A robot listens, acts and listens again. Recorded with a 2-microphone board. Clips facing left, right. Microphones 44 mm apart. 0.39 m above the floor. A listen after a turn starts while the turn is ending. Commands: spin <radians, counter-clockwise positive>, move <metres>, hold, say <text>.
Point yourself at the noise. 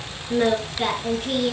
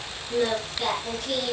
spin 0.44
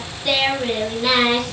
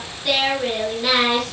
say Facing the singing.